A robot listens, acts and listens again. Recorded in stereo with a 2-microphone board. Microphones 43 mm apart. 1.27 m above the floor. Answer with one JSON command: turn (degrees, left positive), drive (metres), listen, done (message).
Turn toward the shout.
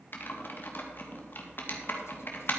{"listen": true}
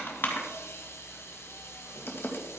{"listen": true}
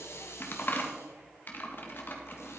{"done": "I can't make out a shout, only a hiss and typing on a keyboard."}